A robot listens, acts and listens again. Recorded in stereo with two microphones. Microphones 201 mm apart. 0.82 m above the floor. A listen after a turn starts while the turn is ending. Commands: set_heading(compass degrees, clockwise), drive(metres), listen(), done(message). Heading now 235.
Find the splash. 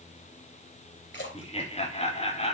set_heading(165)
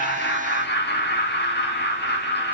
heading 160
listen()
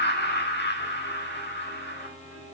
done("I heard a splash, but can't make it out now. It was about 5° right or 35° left.")